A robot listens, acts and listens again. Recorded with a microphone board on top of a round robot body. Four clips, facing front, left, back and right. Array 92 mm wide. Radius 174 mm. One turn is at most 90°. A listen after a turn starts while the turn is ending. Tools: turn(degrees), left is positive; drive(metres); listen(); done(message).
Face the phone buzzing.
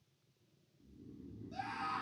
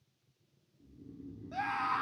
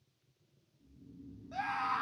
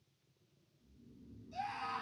listen()
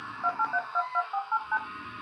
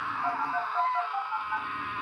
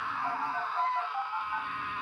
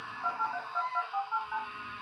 done("Facing the phone buzzing, 2 to 4 m away.")